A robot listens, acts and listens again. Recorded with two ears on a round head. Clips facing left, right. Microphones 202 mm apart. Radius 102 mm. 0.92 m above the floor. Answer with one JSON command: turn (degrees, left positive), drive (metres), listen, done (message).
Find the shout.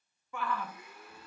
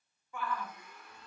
{"turn": 60}
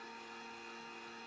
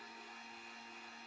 {"listen": true}
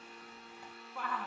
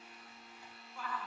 {"turn": 50}
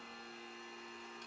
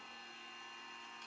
{"listen": true}
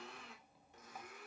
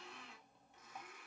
{"listen": true}
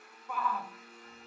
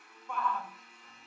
{"done": "Facing the shout."}